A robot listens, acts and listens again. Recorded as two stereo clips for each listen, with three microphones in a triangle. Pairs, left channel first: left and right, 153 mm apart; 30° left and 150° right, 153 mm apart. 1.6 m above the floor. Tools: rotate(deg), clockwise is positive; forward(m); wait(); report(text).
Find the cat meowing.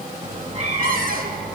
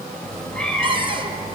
rotate(55)
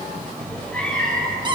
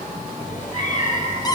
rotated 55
report("Facing the cat meowing, 2 to 4 m away.")